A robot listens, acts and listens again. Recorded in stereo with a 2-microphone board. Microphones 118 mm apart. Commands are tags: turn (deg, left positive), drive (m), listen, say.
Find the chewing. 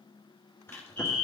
<turn deg="20"/>
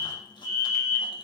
<listen/>
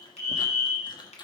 <turn deg="140"/>
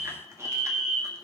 <listen/>
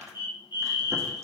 <turn deg="-25"/>
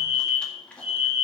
<turn deg="10"/>
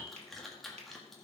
<say>Found it: chewing, straight ahead.</say>